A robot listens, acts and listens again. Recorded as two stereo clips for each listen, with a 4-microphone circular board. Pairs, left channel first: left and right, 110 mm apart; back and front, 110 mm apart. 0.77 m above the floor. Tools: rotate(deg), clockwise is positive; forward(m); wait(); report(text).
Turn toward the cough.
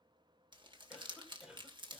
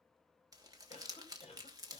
rotate(175)
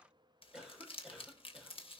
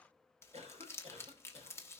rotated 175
rotate(10)
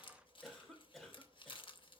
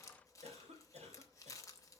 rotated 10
report("Facing the cough, over 4 m away.")